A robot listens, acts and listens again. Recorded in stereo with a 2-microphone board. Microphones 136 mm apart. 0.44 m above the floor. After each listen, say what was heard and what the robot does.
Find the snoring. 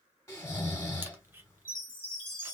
The snoring: about 20° left or 160° left. Turn 20° left.
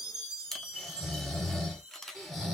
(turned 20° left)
Found it: snoring, straight ahead.